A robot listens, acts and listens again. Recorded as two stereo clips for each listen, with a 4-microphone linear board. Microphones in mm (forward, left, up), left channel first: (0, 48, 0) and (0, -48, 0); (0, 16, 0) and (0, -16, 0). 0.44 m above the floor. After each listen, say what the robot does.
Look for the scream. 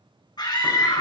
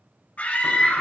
Turn 50° left.
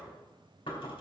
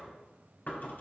Keep listening.
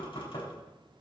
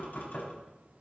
Keep listening.
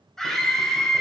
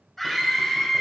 Facing the scream.